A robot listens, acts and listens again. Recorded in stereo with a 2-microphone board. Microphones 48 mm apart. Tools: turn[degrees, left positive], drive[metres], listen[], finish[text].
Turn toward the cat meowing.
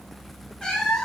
Action: turn[30]
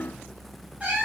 Thought: So it is at 25° right.
Action: turn[-25]
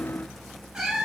Thought: The cat meowing is now 10° right.
Action: turn[-10]
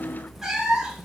Thought: The cat meowing is now 15° right.
Action: turn[-15]
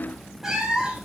Thought: The cat meowing is now 15° right.
Action: turn[-15]
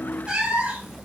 Thought: The cat meowing is now 20° right.
Action: turn[-20]
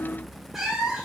Action: finish[Found it: a cat meowing, straight ahead, 1 to 2 m away.]